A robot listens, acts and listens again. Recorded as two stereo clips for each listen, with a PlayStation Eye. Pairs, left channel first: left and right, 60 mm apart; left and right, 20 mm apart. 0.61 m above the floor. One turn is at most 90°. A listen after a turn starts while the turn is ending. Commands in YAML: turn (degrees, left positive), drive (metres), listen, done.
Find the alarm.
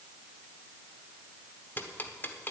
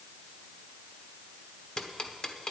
listen: true
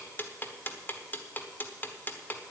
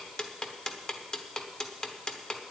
listen: true
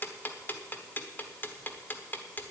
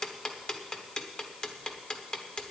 done: "I can't make out an alarm, only ticking."